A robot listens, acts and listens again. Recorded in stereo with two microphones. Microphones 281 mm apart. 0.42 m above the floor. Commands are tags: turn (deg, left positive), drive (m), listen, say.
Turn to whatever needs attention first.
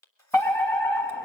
<turn deg="30"/>
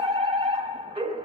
<turn deg="-20"/>
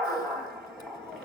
<say>Facing the fire alarm.</say>